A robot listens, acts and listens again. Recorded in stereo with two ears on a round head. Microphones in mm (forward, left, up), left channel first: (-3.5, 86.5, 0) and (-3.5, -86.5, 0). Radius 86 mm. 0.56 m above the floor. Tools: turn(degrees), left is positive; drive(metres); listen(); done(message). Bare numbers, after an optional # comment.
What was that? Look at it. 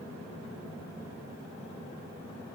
listen()
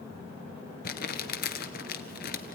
# The crumpling: about 50° left or 130° left.
turn(50)
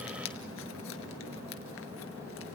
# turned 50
# So it is at 80° left.
turn(80)
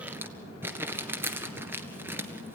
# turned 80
# The crumpling is now 10° right.
turn(-10)
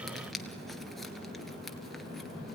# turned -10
done("Facing the crumpling, 1 to 2 m away.")